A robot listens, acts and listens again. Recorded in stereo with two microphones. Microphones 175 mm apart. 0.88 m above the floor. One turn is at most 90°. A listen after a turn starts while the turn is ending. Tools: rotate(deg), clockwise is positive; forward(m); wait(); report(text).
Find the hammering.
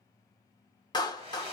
wait()
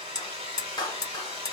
rotate(-20)
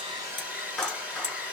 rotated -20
wait()
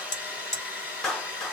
rotate(-90)
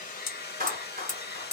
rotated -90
rotate(-45)
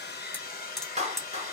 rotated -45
report("Found it: hammering, straight ahead.")